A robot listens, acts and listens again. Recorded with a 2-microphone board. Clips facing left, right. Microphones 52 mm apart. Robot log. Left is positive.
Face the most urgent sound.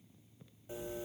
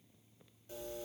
cmd idle
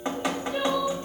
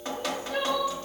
note: The crying: about 65° right or 115° right.
cmd yaw -65
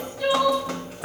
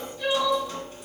end: Facing the crying, 2 to 4 m away.